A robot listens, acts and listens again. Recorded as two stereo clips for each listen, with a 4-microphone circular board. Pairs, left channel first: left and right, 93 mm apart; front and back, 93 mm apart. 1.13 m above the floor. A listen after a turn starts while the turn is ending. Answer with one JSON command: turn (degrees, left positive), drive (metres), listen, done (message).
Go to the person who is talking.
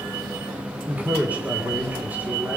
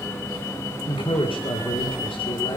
{"turn": -15}
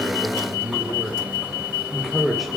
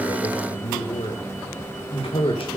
{"drive": 1.0}
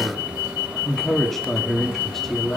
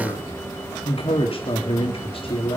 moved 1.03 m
{"drive": 1.0}
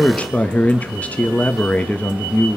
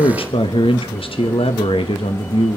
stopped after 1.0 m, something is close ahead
{"turn": 15}
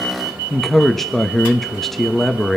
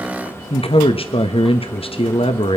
{"done": "Arrived at the man speaking, straight ahead."}